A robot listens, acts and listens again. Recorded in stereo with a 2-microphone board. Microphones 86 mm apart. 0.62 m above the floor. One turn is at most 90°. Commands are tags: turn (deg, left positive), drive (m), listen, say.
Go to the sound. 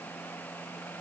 <listen/>
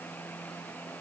<listen/>
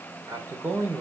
<turn deg="-30"/>
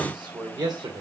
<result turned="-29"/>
<turn deg="-90"/>
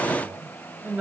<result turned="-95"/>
<turn deg="-25"/>
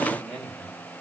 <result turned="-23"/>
<drive m="1.0"/>
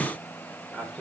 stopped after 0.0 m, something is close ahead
<say>Blocked. The man speaking is further on, straight ahead.</say>